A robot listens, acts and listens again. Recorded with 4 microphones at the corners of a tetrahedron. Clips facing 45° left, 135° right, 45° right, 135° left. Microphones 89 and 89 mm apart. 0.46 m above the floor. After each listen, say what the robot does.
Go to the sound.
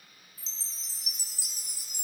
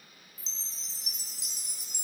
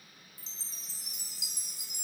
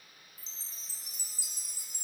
Turn 40° right.
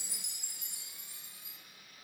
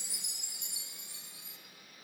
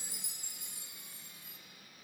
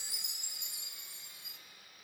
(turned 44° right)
Drive 1.0 m forward.
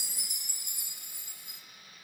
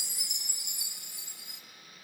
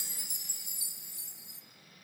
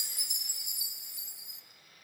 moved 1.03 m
Drive 1.0 m forward.
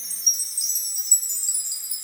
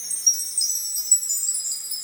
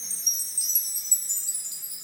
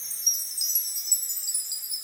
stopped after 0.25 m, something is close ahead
Arrived at the chime, straight ahead.